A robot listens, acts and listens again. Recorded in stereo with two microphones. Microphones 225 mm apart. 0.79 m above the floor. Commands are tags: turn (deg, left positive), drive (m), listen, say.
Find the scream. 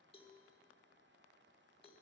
<listen/>
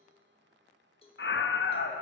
<turn deg="55"/>
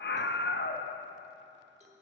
<turn deg="60"/>
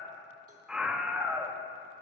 <say>Facing the scream, under 1 m away.</say>